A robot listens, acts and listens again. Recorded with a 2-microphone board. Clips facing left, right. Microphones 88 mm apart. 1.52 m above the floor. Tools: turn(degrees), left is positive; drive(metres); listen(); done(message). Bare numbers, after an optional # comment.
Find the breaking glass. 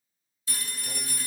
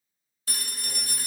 listen()
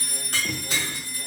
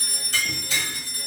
# The breaking glass: about 55° left or 125° left.
turn(55)
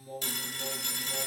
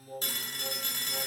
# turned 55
listen()
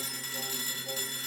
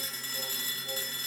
done("I heard breaking glass, but can't make it out now. It was about straight ahead or 70° left.")